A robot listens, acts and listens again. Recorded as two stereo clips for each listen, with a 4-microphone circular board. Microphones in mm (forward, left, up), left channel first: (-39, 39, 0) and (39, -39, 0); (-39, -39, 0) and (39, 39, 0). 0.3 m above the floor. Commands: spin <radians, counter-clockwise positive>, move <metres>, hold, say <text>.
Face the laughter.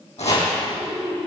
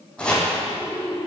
spin -1.31
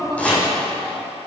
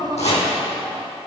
say Found it: laughter, straight ahead, 2 to 4 m away.